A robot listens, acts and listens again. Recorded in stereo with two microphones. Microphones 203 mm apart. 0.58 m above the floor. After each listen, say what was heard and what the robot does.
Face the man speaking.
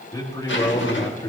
The man speaking: about 20° left or 160° left. Turn 20° left.
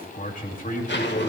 So it is at 135° left. Turn 135° left.
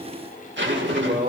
The man speaking is now 45° right. Turn 45° right.
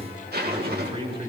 The man speaking is now 25° right. Turn 25° right.
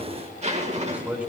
The man speaking is now 10° right. Turn 10° right.
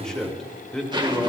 Found it: a man speaking, straight ahead.